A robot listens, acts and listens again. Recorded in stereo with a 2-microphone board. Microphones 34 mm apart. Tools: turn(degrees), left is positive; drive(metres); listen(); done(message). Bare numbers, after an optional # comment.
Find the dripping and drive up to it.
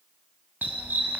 listen()
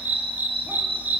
listen()
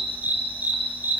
done("I can't make out dripping to turn to.")